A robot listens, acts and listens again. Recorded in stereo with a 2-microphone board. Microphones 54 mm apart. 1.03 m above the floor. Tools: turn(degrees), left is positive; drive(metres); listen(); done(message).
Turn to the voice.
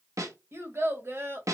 turn(degrees=-55)
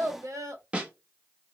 turn(degrees=-70)
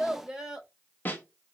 turn(degrees=-15)
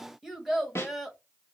done("Facing the child speaking, 1 to 2 m away.")